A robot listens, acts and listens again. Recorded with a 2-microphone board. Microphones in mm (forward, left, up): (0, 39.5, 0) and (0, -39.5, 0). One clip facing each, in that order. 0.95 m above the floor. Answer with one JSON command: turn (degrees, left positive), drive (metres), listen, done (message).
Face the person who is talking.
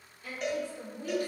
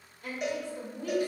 {"turn": -65}
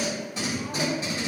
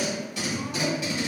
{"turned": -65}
{"listen": true}
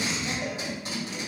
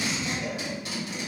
{"listen": true}
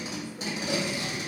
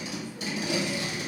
{"done": "I heard a woman speaking, but can't make it out now. It was about straight ahead or 50° right."}